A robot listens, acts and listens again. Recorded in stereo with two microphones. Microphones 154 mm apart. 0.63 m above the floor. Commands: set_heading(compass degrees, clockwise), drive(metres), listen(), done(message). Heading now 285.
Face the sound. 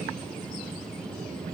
listen()
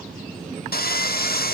set_heading(195)
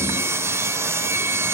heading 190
set_heading(205)
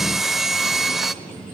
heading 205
done("Facing the sawing.")